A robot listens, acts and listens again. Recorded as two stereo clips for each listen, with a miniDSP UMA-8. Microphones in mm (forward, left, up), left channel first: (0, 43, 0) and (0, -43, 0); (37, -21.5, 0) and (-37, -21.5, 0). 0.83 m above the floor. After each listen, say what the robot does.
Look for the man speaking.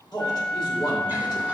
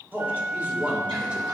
Turn 110° left.
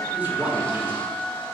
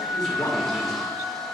Turn 20° right.
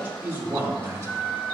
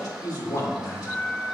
Turn 35° right.
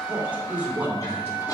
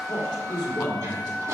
Turn 25° right.
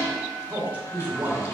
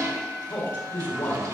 Turn 25° right.
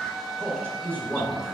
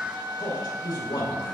Turn 15° left.
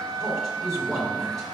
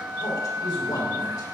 Found it: a man speaking, straight ahead, 2 to 4 m away.